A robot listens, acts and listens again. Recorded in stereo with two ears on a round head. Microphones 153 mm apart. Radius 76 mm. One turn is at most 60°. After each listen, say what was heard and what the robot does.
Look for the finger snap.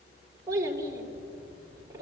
Keep listening.
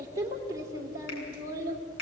The finger snap: about 65° left or 115° left. Turn 60° left.
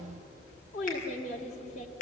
So it is at 55° left. Turn 55° left.
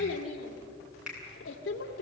Facing the finger snap, over 4 m away.